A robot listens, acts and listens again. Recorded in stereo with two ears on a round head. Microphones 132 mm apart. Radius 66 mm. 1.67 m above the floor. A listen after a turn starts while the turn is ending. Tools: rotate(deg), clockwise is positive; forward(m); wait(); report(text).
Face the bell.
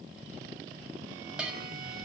rotate(30)
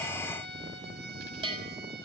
rotate(145)
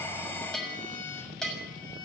report("Found it: a bell, straight ahead, over 4 m away.")